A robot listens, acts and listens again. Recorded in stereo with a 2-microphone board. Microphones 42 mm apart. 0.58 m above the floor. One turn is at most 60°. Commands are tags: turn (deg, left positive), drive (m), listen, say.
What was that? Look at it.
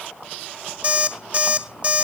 <turn deg="-25"/>
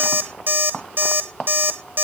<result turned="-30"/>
<turn deg="-60"/>
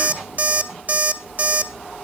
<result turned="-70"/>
<turn deg="-50"/>
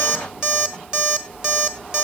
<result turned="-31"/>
<turn deg="-20"/>
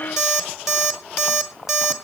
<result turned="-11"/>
<say>Facing the alarm clock.</say>